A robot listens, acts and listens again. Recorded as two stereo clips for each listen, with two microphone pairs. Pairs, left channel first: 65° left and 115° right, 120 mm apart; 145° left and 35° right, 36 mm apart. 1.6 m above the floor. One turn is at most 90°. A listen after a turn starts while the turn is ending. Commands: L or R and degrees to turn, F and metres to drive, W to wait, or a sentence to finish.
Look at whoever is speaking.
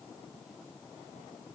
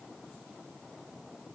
W
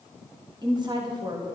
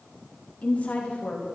R90
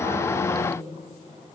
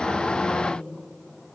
R70
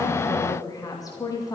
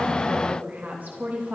Facing the woman speaking.